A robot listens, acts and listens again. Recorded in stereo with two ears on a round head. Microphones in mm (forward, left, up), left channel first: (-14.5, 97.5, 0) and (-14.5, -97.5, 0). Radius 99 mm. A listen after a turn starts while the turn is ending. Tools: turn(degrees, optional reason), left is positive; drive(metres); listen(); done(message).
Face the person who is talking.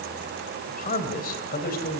turn(degrees=45, reason="The man speaking: about 45° left or 135° left.")
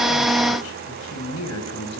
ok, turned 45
turn(degrees=75, reason="So it is at 75° left.")
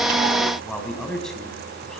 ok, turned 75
done("Found it: a man speaking, straight ahead.")